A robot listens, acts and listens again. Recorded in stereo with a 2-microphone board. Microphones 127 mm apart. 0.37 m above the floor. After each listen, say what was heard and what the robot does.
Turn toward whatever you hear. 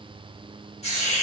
The hiss: about 55° left or 125° left. Turn 55° left.
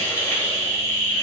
So it is at 20° left. Turn 20° left.
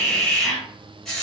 Facing the hiss.